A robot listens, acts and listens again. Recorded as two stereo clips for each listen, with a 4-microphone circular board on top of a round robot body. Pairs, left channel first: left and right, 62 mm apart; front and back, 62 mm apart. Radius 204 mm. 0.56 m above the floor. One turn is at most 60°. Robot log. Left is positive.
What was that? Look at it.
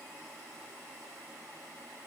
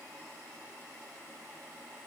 cmd idle
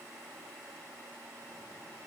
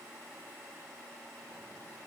cmd idle
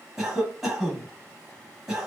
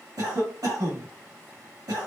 note: The cough: 175° right.
cmd yaw -60
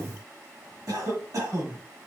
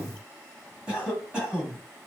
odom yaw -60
note: The cough is now 105° right.
cmd yaw -60
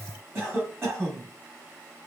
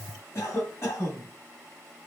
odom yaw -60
note: The cough is now 45° right.
cmd yaw -45
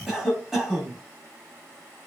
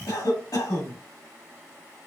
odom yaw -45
end: Found it: a cough, straight ahead.